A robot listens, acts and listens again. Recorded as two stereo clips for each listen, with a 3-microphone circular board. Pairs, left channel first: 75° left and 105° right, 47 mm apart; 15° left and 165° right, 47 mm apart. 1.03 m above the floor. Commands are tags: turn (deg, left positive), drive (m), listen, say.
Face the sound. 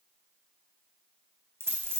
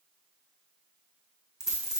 <turn deg="-85"/>
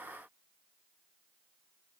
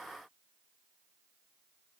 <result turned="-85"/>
<say>Facing where the dropped coin came from. I can't hear it now.</say>